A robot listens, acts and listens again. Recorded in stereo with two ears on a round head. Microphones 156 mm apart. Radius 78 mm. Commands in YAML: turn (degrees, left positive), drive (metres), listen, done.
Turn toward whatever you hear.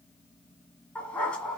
turn: 30
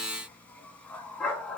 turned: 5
turn: 30
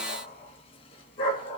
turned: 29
turn: 145
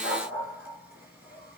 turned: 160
turn: -10
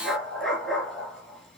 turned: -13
done: "Found it: a dog barking, straight ahead, 2 to 4 m away."